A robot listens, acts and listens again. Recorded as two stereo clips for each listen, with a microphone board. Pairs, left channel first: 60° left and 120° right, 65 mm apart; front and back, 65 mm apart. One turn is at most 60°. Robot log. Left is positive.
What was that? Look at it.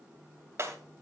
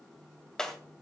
note: The breaking glass: 80° right.
cmd yaw -60
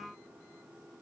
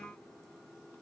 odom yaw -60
note: Nothing new. It was at 20° right.
cmd yaw -20
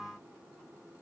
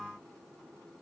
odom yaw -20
end: I heard breaking glass from this way, but can't make it out now.